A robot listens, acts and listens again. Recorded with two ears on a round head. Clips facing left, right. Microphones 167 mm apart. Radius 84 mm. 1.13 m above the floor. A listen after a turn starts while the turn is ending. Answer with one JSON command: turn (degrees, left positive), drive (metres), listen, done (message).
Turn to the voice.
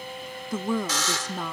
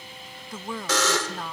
{"turn": 90}
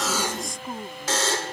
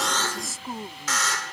{"done": "Facing the woman speaking."}